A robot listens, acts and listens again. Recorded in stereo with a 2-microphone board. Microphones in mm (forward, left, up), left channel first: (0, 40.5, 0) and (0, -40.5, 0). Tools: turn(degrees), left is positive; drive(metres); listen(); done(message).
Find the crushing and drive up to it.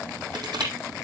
turn(degrees=-65)
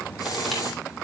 listen()
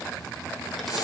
listen()
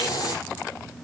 done("I heard crushing, but can't make it out now. It was about straight ahead or 50° right. I did not reach it.")